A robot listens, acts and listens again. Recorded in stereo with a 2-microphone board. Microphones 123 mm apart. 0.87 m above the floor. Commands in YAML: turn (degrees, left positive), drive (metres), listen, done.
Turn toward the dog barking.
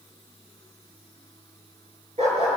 turn: -60
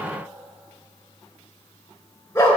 turn: 20
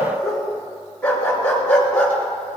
turn: 10
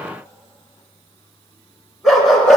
done: "Found it: a dog barking, straight ahead, 2 to 4 m away."